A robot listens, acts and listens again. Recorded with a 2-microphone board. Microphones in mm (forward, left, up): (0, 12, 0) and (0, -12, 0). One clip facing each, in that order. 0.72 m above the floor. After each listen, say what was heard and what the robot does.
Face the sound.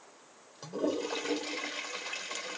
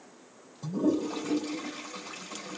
Turn 90° left.
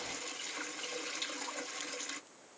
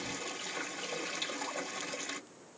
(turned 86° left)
So it is at 10° right. Turn 10° right.
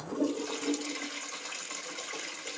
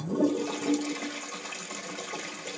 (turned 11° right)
Found it: a toilet flushing, straight ahead.